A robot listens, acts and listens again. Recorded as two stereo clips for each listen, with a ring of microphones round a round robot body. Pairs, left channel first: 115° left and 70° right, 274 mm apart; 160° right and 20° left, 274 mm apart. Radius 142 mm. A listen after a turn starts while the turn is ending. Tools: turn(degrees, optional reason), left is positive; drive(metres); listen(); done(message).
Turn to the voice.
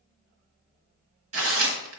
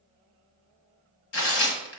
listen()
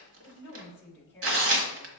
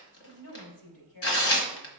turn(degrees=-165, reason="The woman speaking: 165° right.")
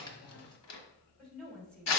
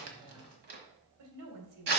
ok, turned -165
turn(degrees=25, reason="The woman speaking is now 25° left.")
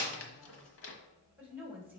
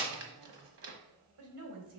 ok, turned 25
turn(degrees=15, reason="The woman speaking is now 15° left.")
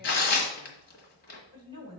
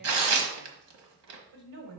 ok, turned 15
done("Found it: a woman speaking, straight ahead, 2 to 4 m away.")